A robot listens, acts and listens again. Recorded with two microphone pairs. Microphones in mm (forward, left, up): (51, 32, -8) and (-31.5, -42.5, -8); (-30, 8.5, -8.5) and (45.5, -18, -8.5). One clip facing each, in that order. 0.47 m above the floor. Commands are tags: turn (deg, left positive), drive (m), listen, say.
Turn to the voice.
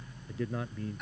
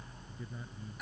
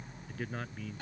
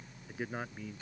<turn deg="60"/>
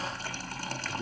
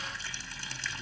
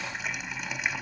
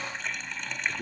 <listen/>
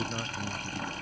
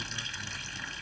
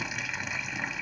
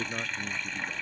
<listen/>
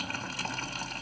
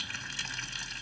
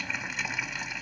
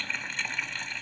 <say>I heard a man speaking from this way, but can't make it out now.</say>